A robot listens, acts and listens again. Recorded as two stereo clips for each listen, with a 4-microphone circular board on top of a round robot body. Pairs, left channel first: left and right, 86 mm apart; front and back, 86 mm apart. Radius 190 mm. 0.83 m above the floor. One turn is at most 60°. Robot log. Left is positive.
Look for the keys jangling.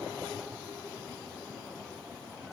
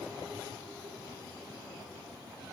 cmd idle
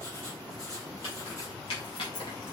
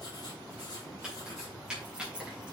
note: The keys jangling: 100° left.
cmd yaw +60
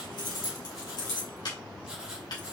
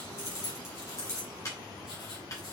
note: The keys jangling is now 55° left.
cmd yaw +55
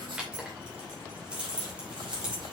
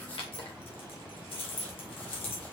note: The keys jangling is now 10° right.
cmd yaw -10
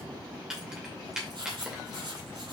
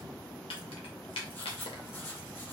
end: Facing the keys jangling, 2 to 4 m away.